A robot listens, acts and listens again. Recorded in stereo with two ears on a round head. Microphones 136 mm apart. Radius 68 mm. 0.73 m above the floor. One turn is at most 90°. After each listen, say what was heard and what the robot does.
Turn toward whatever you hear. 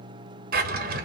The drawer: about 60° right or 120° right. Turn 60° right.
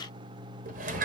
So it is at 55° right. Turn 55° right.
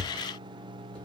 Found it: a drawer, straight ahead.